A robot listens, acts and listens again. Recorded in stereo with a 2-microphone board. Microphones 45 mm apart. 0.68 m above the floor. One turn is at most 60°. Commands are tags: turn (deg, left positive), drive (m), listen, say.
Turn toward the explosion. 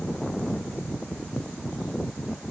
<listen/>
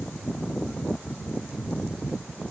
<listen/>
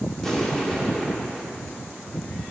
<turn deg="30"/>
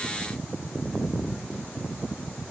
<listen/>
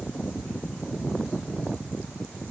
<say>I heard an explosion, but can't make it out now. It was about 20° right or 140° left.</say>